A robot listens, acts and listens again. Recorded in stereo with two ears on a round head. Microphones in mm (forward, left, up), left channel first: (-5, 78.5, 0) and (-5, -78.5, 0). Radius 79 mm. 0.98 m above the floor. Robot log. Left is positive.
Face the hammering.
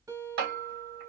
note: The hammering: about 55° right or 125° right.
cmd yaw -55
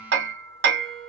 note: So it is at 70° right.
cmd yaw -70
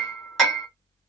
end: Found it: hammering, straight ahead, 1 to 2 m away.